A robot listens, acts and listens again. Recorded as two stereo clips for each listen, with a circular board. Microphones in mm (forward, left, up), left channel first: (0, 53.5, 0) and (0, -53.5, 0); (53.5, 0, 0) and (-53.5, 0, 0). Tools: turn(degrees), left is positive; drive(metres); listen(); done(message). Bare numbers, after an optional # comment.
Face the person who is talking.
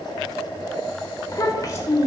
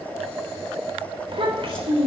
# The child speaking: 145° left.
turn(145)
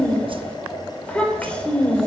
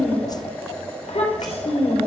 # The child speaking is now 10° left.
turn(10)
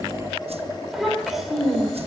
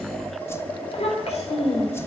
done("Facing the child speaking, 2 to 4 m away.")